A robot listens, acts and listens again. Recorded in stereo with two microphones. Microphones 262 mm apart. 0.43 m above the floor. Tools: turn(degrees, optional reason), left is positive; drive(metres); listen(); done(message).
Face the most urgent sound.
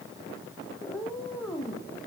listen()
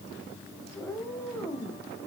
listen()
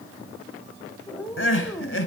turn(degrees=50, reason="The crying: about 50° left or 130° left.")
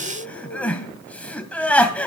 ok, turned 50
done("Facing the crying, 1 to 2 m away.")